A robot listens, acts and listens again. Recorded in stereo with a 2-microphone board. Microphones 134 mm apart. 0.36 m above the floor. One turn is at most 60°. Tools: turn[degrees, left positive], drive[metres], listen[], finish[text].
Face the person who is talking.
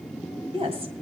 Thought: The woman speaking: about 50° right or 130° right.
Action: turn[-50]
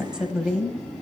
Thought: So it is at 10° right.
Action: turn[-10]
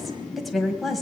Action: finish[Facing the woman speaking, 1 to 2 m away.]